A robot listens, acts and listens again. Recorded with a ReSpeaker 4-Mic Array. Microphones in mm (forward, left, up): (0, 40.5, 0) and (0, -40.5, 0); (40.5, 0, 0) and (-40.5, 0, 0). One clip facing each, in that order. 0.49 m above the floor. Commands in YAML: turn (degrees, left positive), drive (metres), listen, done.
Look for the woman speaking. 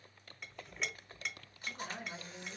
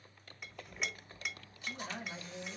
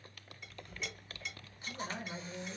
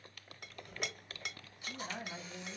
done: "Facing the woman speaking."